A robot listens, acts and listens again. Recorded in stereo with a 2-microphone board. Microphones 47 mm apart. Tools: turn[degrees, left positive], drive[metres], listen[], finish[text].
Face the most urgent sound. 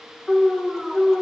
Action: turn[30]
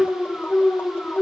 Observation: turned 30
Thought: So it is at 145° left.
Action: turn[145]
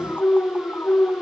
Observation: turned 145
Thought: The alarm is now 50° left.
Action: turn[50]
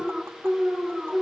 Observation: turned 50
Thought: The alarm is now 15° right.
Action: turn[-15]
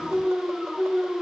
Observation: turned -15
Action: finish[Found it: an alarm, straight ahead, 2 to 4 m away.]